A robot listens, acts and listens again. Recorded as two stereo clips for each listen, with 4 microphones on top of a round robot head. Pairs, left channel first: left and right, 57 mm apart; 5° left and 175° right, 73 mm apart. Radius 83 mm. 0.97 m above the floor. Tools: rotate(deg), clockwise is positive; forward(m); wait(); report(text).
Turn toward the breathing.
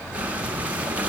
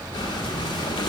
rotate(25)
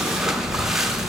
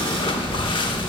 report("Found it: breathing, straight ahead.")